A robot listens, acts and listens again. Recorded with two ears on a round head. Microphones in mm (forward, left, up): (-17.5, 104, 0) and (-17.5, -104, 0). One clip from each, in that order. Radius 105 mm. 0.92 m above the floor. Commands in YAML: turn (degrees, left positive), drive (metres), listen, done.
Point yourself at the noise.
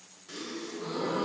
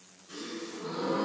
turn: 65
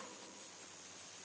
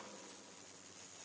listen: true
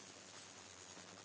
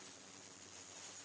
done: "I heard a gasp, but can't make it out now. It was about straight ahead or 50° left."